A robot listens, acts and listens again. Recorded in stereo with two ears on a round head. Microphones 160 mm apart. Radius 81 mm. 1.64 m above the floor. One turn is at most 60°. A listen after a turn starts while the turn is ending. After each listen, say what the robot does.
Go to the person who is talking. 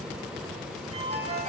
Keep listening.
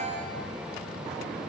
Keep listening.
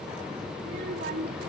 Turn 60° right.
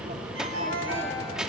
Drive 1.0 m forward.
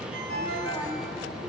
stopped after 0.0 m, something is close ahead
Keep listening.
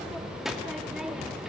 Blocked. The child speaking is further on, straight ahead.